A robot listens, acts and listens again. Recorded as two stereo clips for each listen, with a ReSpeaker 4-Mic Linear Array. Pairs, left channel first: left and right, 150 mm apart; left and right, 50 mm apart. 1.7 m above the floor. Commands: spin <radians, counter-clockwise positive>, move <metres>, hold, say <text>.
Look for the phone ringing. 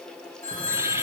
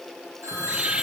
spin -1.31
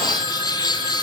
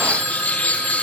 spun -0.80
hold
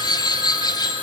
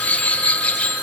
spin -0.52
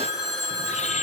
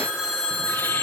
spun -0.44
say Found it: a phone ringing, straight ahead, over 4 m away.